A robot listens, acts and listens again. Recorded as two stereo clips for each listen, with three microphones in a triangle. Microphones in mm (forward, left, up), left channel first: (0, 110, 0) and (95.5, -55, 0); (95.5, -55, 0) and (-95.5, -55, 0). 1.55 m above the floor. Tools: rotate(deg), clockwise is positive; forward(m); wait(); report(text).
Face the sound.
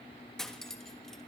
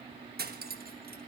rotate(155)
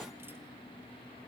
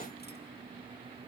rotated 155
wait()
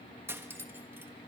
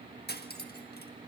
rotate(-20)
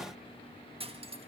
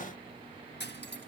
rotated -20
report("Facing the cutlery clinking, 1 to 2 m away.")